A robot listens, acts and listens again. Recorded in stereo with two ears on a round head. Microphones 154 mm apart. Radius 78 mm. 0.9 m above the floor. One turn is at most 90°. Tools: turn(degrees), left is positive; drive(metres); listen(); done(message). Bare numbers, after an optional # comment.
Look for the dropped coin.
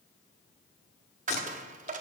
# The dropped coin: about 45° right or 135° right.
turn(-45)
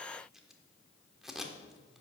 listen()
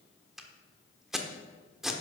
done("I heard a dropped coin, but can't make it out now. It was about straight ahead or 90° right.")